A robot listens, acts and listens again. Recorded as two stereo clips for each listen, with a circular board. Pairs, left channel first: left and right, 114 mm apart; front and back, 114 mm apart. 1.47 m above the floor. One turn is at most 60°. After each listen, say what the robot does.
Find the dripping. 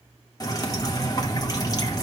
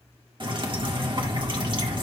Turn 60° left.
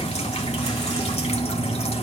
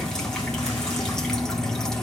Turn 60° left.
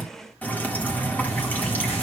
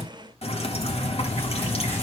Turn 15° left.
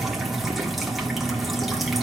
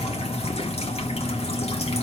Found it: dripping, straight ahead, 1 to 2 m away.